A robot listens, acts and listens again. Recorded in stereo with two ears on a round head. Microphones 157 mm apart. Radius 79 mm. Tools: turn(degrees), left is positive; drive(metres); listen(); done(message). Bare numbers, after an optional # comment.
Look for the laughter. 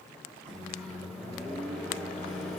listen()
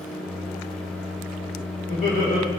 # The laughter: about 45° left or 135° left.
turn(45)
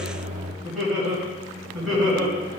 done("Found it: laughter, straight ahead.")